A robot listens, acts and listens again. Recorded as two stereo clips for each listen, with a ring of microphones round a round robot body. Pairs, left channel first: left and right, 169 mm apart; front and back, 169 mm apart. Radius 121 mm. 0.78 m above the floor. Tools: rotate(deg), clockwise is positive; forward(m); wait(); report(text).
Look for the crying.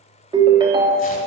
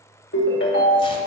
wait()
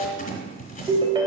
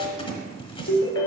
wait()
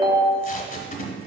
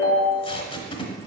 report("I can't make out crying, only a ringtone and tape being pulled.")